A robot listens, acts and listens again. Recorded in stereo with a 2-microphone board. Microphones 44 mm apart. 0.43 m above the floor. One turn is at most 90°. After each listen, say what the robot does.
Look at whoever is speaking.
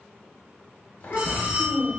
Turn 40° left.
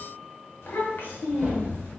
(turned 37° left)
Turn 90° left.
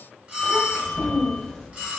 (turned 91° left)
Turn 10° left.
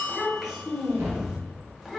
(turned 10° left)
Facing the child speaking, under 1 m away.